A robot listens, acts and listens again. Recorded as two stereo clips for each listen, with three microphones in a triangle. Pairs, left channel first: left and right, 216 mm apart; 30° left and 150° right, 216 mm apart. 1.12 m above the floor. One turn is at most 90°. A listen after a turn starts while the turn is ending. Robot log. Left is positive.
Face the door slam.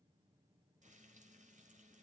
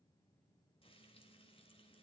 cmd idle
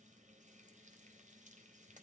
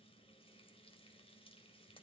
cmd idle
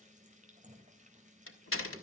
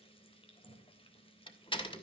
note: The door slam: 95° left.
cmd yaw +90
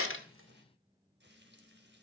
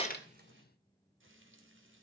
end: I heard a door slam from this way, but can't make it out now.